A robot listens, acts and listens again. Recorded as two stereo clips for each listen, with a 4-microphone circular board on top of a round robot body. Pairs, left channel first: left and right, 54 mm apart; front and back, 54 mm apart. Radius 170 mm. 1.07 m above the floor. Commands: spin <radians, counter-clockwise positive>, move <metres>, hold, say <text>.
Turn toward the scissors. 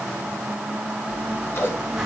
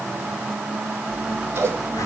spin 2.36
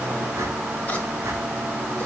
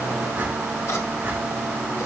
spin 0.44
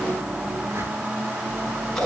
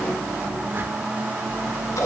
spin 0.17
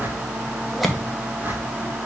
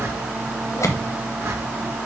say Found it: scissors, straight ahead, 1 to 2 m away.